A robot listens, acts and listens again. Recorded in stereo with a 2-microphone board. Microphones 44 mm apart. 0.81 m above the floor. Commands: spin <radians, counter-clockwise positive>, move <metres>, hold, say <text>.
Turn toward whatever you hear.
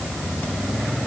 hold
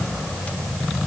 hold
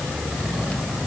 say I can't make out anything to turn to.